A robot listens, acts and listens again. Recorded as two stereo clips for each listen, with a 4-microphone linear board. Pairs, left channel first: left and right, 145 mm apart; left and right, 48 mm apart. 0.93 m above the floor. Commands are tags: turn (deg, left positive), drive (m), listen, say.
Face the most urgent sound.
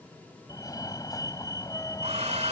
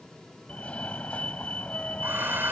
<turn deg="25"/>
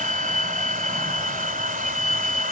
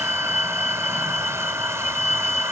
<say>Found it: a fire alarm, straight ahead.</say>